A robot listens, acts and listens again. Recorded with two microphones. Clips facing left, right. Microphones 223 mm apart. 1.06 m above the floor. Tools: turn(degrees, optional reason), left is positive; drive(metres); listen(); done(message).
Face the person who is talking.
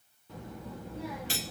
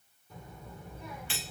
turn(degrees=90)
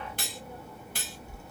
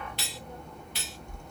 done("Found it: a child speaking, straight ahead, 1 to 2 m away.")